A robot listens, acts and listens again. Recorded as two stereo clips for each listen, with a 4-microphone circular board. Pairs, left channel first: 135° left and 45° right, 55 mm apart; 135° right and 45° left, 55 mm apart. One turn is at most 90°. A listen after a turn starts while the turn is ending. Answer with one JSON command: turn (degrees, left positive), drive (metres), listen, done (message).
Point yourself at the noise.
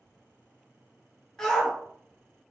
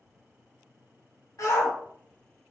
{"turn": -90}
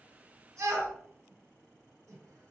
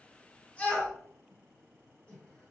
{"turn": -70}
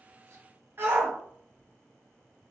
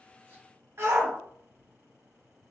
{"done": "Facing the shout, under 1 m away."}